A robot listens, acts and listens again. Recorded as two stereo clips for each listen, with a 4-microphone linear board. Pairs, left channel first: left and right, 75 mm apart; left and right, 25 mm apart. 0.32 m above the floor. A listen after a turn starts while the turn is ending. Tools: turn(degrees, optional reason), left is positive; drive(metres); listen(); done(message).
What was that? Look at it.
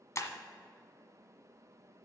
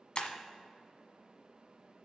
turn(degrees=45, reason="The breaking glass: about 45° left or 135° left.")
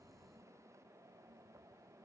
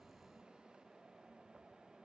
listen()
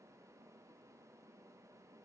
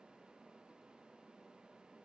done("I heard breaking glass, but can't make it out now. It was about straight ahead or 90° left.")